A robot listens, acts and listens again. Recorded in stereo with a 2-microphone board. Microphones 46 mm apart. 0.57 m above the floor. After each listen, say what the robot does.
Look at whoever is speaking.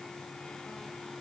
Keep listening.
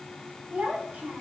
Turn 40° right.
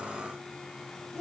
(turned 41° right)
Found it: a child speaking, straight ahead.